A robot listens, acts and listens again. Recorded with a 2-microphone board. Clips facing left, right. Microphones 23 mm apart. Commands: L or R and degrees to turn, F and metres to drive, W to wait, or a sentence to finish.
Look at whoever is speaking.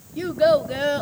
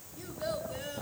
L65
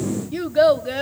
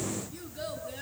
L55
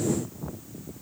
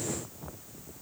W
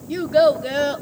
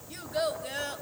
L30
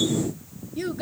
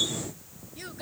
Found it: a child speaking, straight ahead.